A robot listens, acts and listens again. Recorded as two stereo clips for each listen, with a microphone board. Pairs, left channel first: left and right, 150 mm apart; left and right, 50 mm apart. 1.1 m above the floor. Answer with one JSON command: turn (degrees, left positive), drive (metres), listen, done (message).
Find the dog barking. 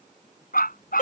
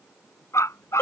{"turn": 75}
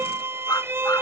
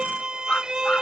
{"listen": true}
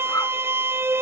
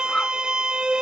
{"turn": 20}
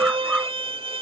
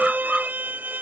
{"done": "Found it: a dog barking, straight ahead."}